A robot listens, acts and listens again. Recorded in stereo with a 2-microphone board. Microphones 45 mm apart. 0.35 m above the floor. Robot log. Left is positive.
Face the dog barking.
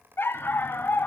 note: The dog barking: about 55° left or 125° left.
cmd yaw +55
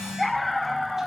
end: Facing the dog barking, under 1 m away.